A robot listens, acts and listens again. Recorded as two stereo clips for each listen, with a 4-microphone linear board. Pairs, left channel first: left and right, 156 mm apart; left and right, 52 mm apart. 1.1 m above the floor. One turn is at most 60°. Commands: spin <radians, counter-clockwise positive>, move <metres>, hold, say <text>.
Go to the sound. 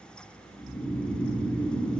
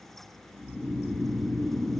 spin -0.52
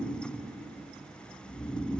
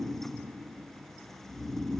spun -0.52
spin 0.44
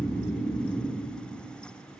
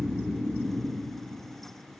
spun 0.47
move 1.0
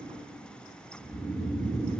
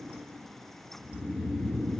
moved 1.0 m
move 1.0
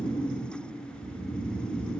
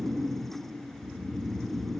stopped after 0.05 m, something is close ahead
say I am next to the snoring.